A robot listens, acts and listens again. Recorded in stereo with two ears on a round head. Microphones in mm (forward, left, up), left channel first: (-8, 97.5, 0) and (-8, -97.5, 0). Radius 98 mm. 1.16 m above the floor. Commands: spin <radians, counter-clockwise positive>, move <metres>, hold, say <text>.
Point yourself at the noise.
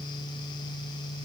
hold
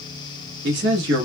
spin -0.96
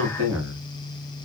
spin -1.22
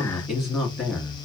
say Facing the man speaking.